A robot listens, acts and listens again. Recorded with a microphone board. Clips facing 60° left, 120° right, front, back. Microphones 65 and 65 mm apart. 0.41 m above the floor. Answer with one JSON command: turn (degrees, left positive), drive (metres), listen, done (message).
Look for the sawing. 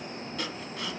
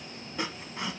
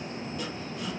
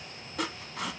{"turn": 175}
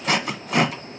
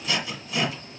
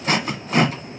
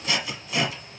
{"turn": 35}
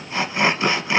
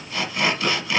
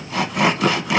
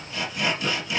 {"done": "Found it: sawing, straight ahead, under 1 m away."}